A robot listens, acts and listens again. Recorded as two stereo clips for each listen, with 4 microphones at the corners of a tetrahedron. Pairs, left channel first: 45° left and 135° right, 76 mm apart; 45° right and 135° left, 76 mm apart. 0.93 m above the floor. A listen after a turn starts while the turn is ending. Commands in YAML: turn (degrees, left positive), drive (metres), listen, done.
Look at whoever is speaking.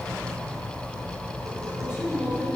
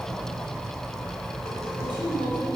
turn: 145
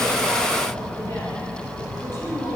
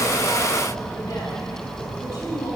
done: "Facing the woman speaking, over 4 m away."